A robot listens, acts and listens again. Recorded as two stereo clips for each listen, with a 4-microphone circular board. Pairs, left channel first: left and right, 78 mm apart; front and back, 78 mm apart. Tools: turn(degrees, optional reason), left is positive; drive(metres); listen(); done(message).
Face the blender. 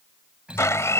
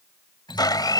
turn(degrees=35, reason="The blender: 35° left.")
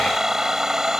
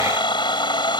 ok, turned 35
done("Found it: a blender, straight ahead.")